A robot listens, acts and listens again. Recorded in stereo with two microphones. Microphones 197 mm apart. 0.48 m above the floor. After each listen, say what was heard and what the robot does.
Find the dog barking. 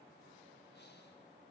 Keep listening.
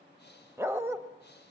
Turn 30° right.
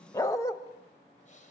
So it is at 15° left. Turn 15° left.
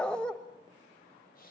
Found it: a dog barking, straight ahead.